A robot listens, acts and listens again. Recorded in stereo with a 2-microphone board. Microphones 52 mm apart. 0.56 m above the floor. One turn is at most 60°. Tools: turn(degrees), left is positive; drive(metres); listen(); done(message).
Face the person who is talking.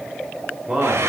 turn(degrees=-30)
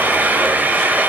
listen()
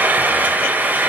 listen()
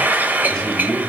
turn(degrees=20)
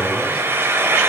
listen()
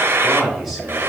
done("Found it: a man speaking, straight ahead, 2 to 4 m away.")